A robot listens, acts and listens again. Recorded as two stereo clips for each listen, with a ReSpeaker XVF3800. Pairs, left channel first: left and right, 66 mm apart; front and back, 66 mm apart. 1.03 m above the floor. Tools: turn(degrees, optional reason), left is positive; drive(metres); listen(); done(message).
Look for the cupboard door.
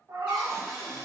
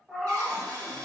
turn(degrees=-165, reason="The cupboard door: 165° right.")
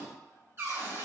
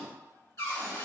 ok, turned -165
turn(degrees=-40, reason="The cupboard door is now 40° right.")
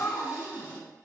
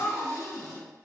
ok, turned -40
turn(degrees=-25, reason="The cupboard door is now 25° right.")
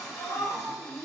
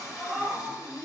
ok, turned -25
turn(degrees=10, reason="The cupboard door is now 10° left.")
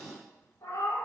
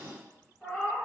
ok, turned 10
done("Facing the cupboard door, 1 to 2 m away.")